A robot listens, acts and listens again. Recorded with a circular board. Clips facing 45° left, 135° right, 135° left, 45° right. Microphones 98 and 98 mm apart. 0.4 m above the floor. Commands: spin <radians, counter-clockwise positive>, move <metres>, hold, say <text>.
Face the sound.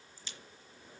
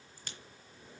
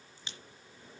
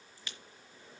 spin -2.88
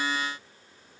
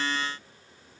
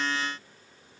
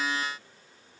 say I heard a crack from this way, but can't make it out now.